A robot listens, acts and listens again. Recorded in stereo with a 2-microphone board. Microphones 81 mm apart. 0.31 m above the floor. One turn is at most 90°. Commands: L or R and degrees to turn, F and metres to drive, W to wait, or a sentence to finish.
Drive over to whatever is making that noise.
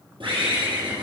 R90
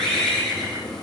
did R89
L10
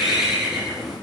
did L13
F1.0
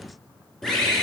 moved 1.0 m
F1.0
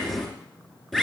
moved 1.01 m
F1.0
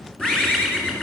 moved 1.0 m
F1.0
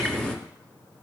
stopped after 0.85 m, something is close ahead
L10
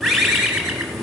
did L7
I am next to the bird.